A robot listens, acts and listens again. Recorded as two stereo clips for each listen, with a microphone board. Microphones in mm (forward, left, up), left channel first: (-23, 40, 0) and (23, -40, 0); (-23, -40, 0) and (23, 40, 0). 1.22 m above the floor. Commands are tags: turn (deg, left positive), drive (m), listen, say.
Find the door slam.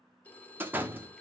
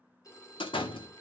<turn deg="-130"/>
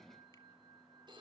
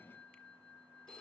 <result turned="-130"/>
<say>I heard a door slam from this way, but can't make it out now.</say>